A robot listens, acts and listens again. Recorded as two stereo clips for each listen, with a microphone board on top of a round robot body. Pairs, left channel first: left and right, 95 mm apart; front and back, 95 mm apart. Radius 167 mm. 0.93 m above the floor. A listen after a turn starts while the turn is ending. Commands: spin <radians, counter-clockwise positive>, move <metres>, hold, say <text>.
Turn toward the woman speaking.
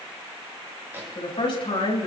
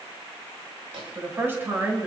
spin 1.92
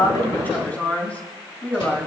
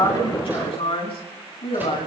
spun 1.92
spin 0.26
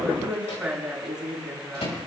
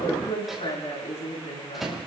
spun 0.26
say Found it: a woman speaking, straight ahead.